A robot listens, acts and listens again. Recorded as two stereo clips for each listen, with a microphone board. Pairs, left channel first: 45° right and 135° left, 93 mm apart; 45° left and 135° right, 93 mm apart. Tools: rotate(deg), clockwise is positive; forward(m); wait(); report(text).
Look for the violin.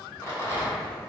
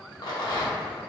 wait()
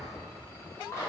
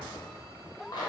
wait()
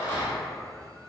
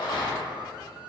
report("I can't make out a violin to turn to.")